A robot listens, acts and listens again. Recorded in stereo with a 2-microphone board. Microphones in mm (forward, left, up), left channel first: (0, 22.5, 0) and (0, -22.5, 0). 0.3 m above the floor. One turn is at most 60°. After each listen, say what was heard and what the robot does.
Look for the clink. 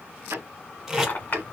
The clink: about 45° left or 135° left. Turn 45° left.
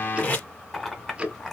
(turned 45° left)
So it is at 10° left. Turn 10° left.
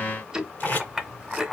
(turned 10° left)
Facing the clink.